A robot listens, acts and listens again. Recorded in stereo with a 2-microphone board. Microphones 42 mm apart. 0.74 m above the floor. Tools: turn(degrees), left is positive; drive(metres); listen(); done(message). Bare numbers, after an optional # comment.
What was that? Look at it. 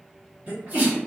# The sneeze: about 35° right or 145° right.
turn(-35)
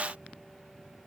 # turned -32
listen()
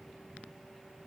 done("I heard a sneeze, but can't make it out now. It was about 5° right or 110° right.")